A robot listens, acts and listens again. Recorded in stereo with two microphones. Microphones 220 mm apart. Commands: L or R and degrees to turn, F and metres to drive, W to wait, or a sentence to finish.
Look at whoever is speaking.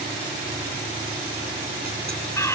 W
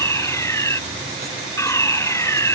W
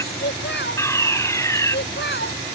L55
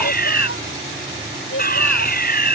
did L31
L95
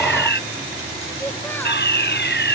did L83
L10
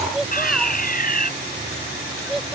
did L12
Facing the child speaking.